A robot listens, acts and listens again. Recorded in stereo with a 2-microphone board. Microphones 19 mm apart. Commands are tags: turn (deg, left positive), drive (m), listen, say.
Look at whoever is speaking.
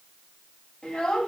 <turn deg="90"/>
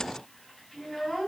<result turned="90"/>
<turn deg="15"/>
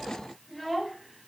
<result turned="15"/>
<say>Facing the child speaking.</say>